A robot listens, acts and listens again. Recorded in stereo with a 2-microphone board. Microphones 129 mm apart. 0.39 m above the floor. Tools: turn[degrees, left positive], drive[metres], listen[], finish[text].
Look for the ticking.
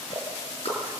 Thought: The ticking: about 55° left or 125° left.
Action: turn[55]
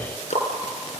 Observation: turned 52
Thought: So it is at 75° left.
Action: turn[75]
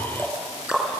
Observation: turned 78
Action: finish[Facing the ticking, over 4 m away.]